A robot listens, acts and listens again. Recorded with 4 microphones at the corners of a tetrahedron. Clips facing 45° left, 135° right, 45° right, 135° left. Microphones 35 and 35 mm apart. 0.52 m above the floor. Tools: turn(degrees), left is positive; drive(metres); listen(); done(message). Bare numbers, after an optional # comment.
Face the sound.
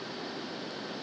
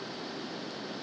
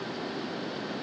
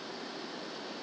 listen()
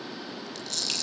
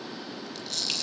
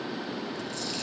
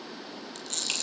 # The camera shutter: 140° left.
turn(140)
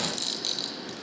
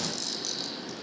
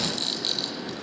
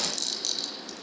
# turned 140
# The camera shutter is now 10° left.
turn(10)
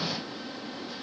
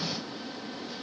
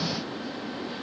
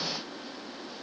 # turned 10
listen()
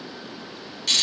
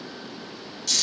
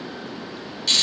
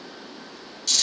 done("Facing the camera shutter, over 4 m away.")